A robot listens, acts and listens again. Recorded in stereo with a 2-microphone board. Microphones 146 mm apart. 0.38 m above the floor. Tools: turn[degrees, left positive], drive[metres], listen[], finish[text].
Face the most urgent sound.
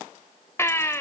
Thought: The baby crying: about 15° left or 165° left.
Action: turn[15]
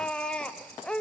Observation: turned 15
Action: finish[Facing the baby crying.]